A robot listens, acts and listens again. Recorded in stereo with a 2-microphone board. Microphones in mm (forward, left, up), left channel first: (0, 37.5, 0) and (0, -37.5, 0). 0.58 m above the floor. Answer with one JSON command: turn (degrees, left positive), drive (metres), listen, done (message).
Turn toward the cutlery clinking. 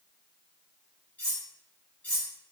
{"turn": 20}
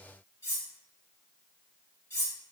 {"turn": 140}
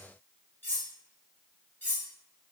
{"turn": 25}
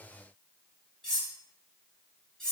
{"turn": 10}
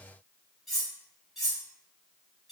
{"done": "Facing the cutlery clinking, 1 to 2 m away."}